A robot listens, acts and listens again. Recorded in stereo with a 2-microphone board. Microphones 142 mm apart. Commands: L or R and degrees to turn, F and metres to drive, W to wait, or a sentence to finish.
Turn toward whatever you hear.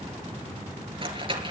R40
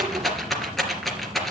Found it: a rattle, straight ahead, 2 to 4 m away.